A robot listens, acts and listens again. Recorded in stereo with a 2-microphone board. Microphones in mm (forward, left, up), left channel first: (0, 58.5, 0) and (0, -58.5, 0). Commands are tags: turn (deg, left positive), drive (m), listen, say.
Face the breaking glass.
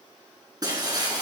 <turn deg="-35"/>
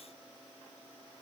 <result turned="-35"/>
<listen/>
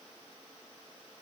<say>I heard breaking glass, but can't make it out now. It was about straight ahead or 110° right.</say>